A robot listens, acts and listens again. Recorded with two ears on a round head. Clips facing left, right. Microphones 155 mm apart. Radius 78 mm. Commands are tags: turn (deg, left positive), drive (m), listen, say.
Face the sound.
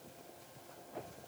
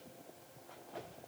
<listen/>
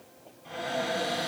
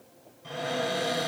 <turn deg="-90"/>
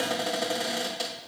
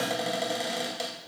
<turn deg="-10"/>
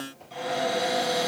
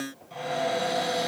<say>Facing the cupboard door, 1 to 2 m away.</say>